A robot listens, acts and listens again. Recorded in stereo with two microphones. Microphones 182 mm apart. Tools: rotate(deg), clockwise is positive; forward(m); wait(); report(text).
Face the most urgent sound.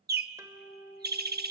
wait()
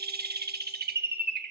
wait()
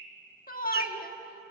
rotate(-50)
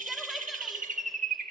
wait()
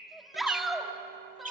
report("Facing the shout.")